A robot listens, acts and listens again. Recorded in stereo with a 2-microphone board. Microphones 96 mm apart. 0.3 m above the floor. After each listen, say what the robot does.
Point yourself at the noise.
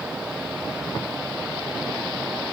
Keep listening.
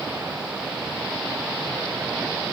Keep listening.
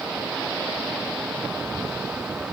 I can't make out anything to turn to.